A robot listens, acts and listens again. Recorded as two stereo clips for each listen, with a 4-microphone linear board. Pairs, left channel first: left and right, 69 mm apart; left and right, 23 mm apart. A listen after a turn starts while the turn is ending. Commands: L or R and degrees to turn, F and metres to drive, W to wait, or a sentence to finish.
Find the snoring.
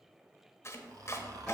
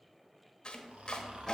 R65
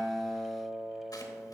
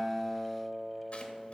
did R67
W
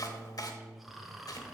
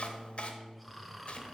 Facing the snoring, 1 to 2 m away.